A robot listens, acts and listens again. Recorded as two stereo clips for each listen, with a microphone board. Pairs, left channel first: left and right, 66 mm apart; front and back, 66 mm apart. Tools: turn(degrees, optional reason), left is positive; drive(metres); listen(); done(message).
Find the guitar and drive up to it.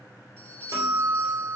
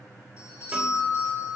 turn(degrees=-110, reason="The guitar: 110° right.")
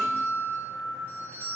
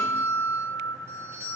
drive(metres=1.0)
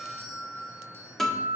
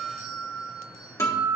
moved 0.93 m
drive(metres=1.0)
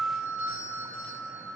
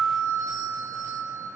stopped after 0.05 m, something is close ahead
done("Arrived at the guitar, straight ahead.")